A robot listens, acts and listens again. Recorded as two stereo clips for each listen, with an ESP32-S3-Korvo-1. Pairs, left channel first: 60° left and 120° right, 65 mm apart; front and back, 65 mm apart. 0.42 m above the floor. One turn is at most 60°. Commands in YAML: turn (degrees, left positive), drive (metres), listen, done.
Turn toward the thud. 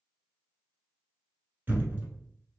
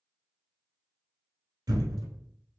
turn: 60
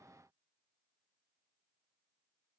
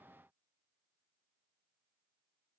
turn: 60
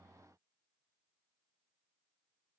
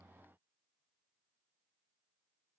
turn: 60
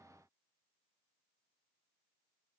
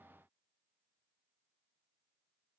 done: "Facing where the thud came from. I can't hear it now."